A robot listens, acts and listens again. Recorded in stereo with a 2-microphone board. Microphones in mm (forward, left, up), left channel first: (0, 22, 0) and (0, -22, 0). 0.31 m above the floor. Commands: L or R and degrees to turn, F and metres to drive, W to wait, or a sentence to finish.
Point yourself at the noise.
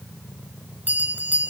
R45
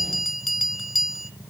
Facing the bell.